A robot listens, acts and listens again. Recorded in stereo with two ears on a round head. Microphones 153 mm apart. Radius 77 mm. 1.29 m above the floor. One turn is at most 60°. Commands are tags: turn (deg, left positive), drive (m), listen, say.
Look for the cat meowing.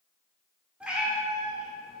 <turn deg="30"/>
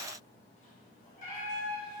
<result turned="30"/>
<turn deg="60"/>
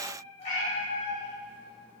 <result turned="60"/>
<turn deg="35"/>
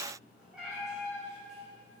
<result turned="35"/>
<say>Facing the cat meowing, 2 to 4 m away.</say>